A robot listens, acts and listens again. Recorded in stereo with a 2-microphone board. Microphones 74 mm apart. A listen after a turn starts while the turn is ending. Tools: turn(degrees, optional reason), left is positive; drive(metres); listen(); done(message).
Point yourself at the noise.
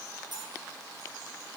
turn(degrees=-90)
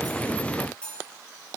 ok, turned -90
turn(degrees=15, reason="So it is at 15° left.")
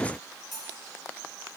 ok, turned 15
done("Found it: cutlery clinking, straight ahead, over 4 m away.")